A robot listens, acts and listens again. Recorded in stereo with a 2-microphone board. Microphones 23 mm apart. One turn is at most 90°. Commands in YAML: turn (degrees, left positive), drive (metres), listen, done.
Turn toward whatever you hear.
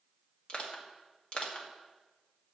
turn: 45
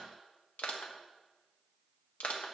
turn: 85
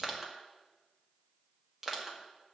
turn: -15
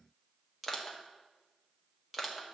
done: "Found it: crushing, straight ahead."